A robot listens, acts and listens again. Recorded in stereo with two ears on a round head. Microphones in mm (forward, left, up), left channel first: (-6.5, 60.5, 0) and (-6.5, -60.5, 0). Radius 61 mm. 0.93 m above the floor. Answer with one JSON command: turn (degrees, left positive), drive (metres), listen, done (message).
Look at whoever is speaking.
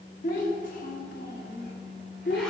{"turn": 90}
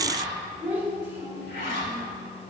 {"turn": -15}
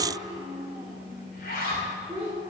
{"turn": -10}
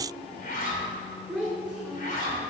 {"done": "Facing the child speaking, 2 to 4 m away."}